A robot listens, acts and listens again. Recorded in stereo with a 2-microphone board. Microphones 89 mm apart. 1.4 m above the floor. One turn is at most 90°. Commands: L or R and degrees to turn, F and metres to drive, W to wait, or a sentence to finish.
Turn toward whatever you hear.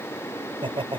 R90
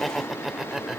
Found it: laughter, straight ahead.